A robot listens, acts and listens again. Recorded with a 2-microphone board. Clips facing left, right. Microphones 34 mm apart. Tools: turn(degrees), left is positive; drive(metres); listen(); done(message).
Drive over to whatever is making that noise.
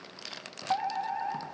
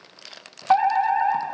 turn(degrees=-50)
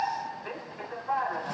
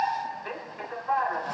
turn(degrees=-15)
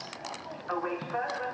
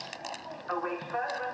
drive(metres=1.0)
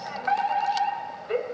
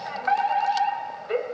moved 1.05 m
turn(degrees=-15)
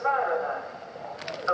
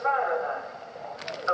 drive(metres=1.0)
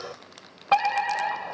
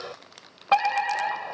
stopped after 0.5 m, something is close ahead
done("I am next to the fire alarm.")